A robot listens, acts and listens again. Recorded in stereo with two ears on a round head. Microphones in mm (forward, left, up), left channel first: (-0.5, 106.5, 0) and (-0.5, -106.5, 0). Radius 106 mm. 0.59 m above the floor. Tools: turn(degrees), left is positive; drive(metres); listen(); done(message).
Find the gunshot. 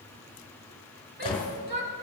turn(degrees=20)
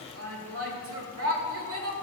listen()
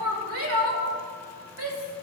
done("I heard a gunshot, but can't make it out now. It was about straight ahead or 140° left.")